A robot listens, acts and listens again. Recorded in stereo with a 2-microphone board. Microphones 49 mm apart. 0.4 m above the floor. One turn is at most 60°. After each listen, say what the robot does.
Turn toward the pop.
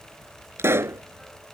Turn 60° right.
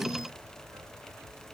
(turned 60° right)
Keep listening.
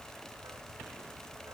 I heard a pop, but can't make it out now. It was about straight ahead or 60° right.